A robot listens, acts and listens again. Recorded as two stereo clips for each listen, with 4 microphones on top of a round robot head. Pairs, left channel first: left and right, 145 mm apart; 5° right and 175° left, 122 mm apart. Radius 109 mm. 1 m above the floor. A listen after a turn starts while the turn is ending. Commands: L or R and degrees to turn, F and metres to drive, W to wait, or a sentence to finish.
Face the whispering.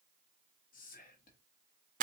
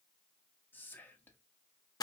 L70
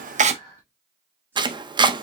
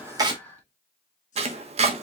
R10
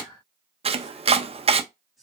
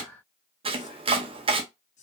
Facing the whispering.